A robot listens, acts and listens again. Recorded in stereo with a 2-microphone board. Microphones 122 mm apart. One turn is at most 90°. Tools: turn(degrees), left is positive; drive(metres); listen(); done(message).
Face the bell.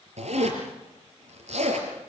listen()
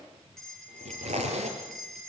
turn(degrees=30)
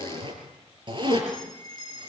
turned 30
turn(degrees=90)
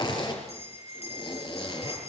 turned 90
turn(degrees=60)
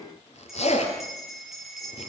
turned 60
done("Facing the bell.")